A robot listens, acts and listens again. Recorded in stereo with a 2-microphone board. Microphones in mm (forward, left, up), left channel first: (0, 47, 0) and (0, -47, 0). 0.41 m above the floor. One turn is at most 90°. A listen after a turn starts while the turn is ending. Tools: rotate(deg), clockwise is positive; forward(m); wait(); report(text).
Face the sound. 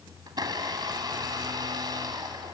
rotate(50)
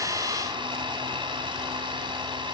rotate(75)
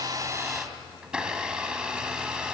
rotate(10)
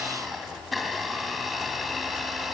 report("Found it: a blender, straight ahead, 2 to 4 m away.")